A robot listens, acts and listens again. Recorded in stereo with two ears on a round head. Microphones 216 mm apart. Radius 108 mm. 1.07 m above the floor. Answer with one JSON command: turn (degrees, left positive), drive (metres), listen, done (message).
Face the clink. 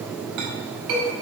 {"turn": -90}
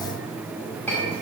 {"done": "Found it: a clink, straight ahead."}